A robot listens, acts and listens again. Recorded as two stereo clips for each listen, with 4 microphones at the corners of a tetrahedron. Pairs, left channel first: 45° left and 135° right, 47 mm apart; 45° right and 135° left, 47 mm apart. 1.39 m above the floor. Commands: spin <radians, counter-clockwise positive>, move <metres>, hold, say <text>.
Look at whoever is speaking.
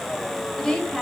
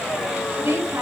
spin 2.09
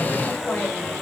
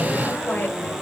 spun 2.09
hold
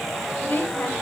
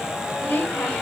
say Found it: a woman speaking, straight ahead.